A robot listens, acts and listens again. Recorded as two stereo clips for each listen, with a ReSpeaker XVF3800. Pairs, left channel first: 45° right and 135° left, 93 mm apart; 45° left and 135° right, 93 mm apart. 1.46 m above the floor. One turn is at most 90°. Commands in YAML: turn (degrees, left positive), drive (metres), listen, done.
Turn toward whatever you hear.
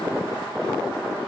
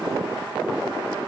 listen: true
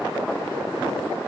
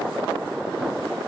listen: true
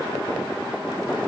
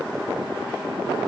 done: "I can't make out anything to turn to."